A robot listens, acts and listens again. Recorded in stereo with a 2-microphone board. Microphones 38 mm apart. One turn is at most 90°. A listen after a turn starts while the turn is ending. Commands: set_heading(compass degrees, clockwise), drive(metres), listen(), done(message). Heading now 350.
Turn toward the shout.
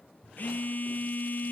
listen()
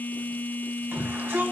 set_heading(60)
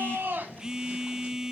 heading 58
listen()
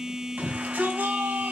set_heading(98)
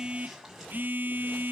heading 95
listen()
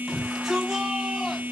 done("Found it: a shout, straight ahead.")